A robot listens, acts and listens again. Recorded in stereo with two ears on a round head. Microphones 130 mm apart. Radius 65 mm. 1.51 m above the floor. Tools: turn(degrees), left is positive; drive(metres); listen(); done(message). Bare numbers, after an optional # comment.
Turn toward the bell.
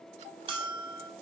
# The bell: about 35° right or 145° right.
turn(-35)
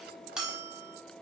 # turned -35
done("Found it: a bell, straight ahead, over 4 m away.")